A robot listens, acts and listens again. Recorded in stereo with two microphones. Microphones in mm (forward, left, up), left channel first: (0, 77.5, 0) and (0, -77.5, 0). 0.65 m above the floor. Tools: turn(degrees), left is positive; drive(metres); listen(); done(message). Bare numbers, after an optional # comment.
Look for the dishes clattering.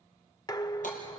# The dishes clattering: about 30° left or 150° left.
turn(30)
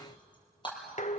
# So it is at 120° left.
turn(120)
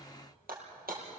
listen()
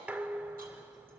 # The dishes clattering is now 10° right.
turn(-10)
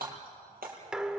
done("Facing the dishes clattering, 1 to 2 m away.")